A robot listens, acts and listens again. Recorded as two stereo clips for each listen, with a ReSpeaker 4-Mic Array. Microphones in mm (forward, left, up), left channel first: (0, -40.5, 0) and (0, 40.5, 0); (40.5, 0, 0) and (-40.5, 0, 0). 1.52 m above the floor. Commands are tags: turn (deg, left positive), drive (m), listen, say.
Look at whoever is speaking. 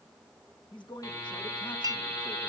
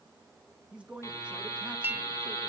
<turn deg="-105"/>
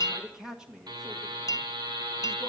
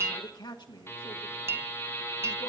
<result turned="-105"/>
<say>Found it: a man speaking, straight ahead.</say>